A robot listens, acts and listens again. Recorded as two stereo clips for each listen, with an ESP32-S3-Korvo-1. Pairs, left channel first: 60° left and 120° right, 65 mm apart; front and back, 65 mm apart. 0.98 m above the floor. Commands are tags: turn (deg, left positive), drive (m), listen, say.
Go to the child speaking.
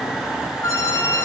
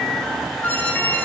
<listen/>
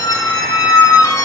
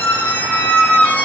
<listen/>
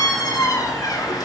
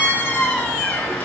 <say>I can't make out a child speaking, only a squeak.</say>